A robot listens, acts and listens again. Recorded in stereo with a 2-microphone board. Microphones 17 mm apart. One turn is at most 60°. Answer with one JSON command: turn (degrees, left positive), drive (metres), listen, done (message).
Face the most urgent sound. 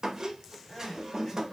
{"turn": 35}
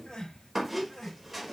{"turn": 60}
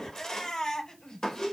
{"turn": 55}
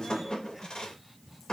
{"listen": true}
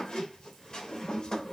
{"listen": true}
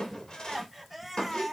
{"done": "Found it: crying, straight ahead, over 4 m away."}